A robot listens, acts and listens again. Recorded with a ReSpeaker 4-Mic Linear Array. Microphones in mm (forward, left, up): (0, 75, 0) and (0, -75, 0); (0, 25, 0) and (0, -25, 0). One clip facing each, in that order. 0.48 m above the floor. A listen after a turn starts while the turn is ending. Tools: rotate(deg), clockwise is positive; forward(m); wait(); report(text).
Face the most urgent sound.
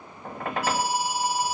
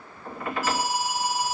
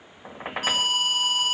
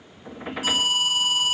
rotate(-70)
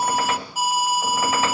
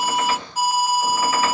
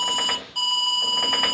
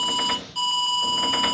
rotate(-10)
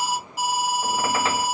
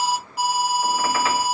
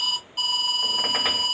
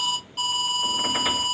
report("Facing the alarm, 1 to 2 m away.")